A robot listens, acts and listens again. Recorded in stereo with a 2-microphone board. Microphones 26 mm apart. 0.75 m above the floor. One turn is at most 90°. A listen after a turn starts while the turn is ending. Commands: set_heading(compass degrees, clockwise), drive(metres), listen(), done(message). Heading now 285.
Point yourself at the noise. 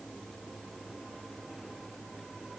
listen()
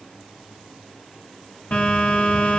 set_heading(215)
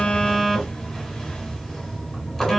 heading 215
set_heading(205)
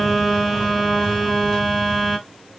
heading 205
done("Facing the phone buzzing.")